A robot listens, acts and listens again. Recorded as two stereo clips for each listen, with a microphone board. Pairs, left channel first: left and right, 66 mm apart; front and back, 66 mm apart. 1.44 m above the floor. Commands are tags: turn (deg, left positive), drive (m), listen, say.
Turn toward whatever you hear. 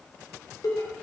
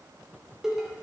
<turn deg="100"/>
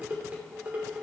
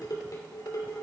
<turn deg="-25"/>
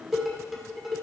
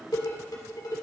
<say>Facing the dishes clattering, 2 to 4 m away.</say>